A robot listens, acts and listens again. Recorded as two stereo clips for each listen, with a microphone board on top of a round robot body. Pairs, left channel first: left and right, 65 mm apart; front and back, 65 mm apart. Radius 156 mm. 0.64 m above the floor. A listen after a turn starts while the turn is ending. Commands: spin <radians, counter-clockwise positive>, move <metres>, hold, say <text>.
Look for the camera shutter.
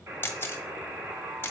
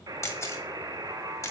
spin 0.61
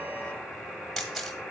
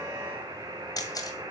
say Found it: a camera shutter, straight ahead.